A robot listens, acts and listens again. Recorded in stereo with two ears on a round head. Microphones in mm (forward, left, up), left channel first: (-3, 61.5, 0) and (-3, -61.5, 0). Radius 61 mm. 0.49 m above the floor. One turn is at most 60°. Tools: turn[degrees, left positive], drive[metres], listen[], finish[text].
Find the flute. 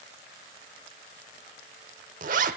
Action: listen[]
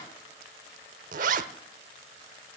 Action: listen[]
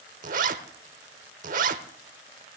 Action: finish[I can't make out a flute, only a zipper.]